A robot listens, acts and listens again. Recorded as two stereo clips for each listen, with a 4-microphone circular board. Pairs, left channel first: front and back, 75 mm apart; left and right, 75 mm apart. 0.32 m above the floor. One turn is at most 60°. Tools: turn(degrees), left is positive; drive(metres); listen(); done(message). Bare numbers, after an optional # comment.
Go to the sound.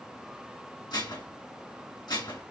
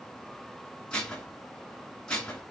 # The dishes clattering: 15° left.
turn(15)
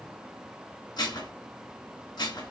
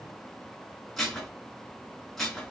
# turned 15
drive(1.0)
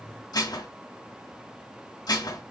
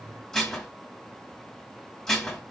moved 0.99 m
# The dishes clattering is now 10° left.
turn(10)
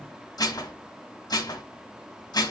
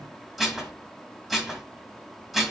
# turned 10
drive(1.0)
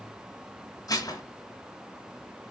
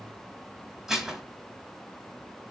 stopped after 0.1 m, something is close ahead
done("I am next to the dishes clattering.")